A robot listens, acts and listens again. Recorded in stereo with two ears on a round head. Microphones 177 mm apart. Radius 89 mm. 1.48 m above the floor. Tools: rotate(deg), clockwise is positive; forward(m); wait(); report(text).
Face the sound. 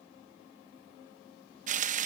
rotate(40)
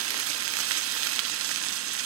rotate(95)
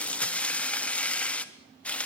report("Found it: frying, straight ahead, 1 to 2 m away.")